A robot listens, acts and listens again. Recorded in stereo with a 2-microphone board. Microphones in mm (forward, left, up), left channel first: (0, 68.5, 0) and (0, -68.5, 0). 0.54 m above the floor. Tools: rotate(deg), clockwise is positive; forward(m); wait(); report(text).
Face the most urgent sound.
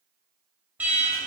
rotate(30)
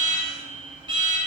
rotate(140)
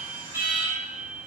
rotate(20)
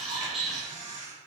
report("Found it: an alarm, straight ahead.")